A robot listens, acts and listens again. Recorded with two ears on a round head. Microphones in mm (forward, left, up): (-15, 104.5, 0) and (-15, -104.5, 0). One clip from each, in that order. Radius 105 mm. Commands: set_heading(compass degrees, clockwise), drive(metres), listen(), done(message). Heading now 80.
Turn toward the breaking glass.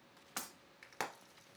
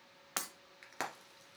set_heading(115)
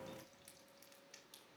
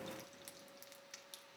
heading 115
listen()
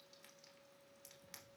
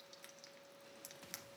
done("I heard breaking glass, but can't make it out now. It was about straight ahead or 110° right.")